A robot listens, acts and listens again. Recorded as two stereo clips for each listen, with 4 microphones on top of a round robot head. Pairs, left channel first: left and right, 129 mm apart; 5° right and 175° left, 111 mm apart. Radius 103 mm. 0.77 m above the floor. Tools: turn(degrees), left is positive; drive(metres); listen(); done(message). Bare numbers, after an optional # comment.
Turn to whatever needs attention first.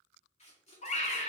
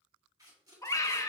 # The scream: 60° left.
turn(60)
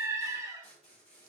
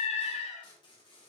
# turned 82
# The scream is now 20° right.
turn(-20)
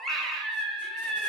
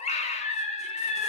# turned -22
done("Facing the scream, 1 to 2 m away.")